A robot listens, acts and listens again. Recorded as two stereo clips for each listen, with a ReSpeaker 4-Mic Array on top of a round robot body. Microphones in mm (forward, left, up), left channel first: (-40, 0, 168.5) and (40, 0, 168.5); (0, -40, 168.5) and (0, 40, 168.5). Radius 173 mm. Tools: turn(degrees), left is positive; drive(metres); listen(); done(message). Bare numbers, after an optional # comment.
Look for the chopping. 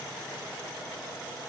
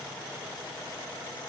listen()
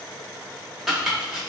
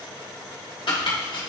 # The chopping: 90° right.
turn(-90)
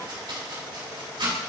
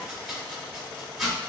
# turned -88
done("Found it: chopping, straight ahead.")